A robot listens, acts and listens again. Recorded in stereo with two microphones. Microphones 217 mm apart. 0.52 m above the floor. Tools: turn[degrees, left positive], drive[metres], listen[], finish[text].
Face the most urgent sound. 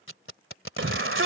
Thought: The shout: about 70° right or 110° right.
Action: turn[-70]
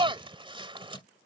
Thought: So it is at 25° right.
Action: turn[-25]
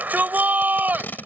Thought: The shout is now 10° right.
Action: turn[-10]
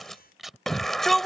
Action: finish[Facing the shout.]